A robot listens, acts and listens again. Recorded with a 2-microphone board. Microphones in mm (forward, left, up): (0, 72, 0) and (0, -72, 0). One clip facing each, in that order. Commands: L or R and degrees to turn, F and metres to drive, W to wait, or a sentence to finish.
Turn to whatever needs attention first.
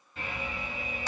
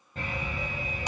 R45
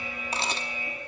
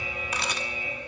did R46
R85
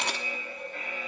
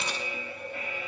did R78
R10
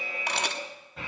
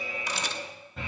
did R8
Facing the alarm, over 4 m away.